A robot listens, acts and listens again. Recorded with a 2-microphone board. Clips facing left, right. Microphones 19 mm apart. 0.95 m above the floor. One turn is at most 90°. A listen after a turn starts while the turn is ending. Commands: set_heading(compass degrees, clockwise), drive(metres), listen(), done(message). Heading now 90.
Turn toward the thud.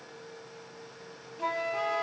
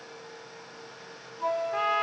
listen()
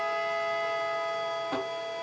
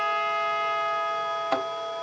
set_heading(145)
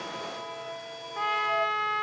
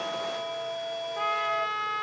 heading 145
listen()
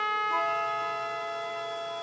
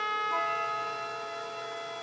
done("I heard a thud, but can't make it out now. It was about straight ahead or 70° right.")